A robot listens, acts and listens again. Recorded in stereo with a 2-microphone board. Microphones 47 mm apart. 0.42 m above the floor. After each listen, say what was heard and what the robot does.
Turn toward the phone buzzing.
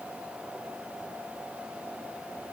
Keep listening.
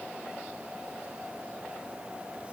Keep listening.
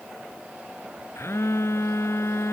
The phone buzzing: about 70° left or 110° left. Turn 70° left.
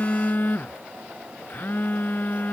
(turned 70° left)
So it is at 40° left. Turn 40° left.
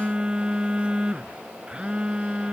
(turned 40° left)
The phone buzzing is now 20° right. Turn 20° right.
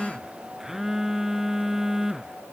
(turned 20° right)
The phone buzzing is now 10° right. Turn 10° right.
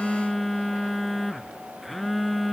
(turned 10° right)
Facing the phone buzzing.